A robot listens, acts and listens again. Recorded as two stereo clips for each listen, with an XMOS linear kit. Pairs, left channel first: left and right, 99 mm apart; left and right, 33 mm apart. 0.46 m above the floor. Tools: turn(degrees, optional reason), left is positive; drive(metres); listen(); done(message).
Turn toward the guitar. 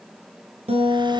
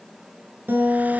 turn(degrees=-90)
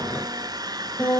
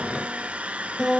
turn(degrees=10, reason="So it is at 10° left.")
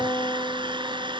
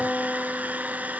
done("Found it: a guitar, straight ahead, over 4 m away.")